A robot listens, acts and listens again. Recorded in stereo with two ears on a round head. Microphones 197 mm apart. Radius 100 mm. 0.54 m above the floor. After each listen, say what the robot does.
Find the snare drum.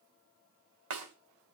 Turn 70° right.
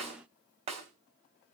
Turn 30° right.
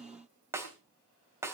Turn 10° right.
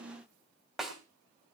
Facing the snare drum, 2 to 4 m away.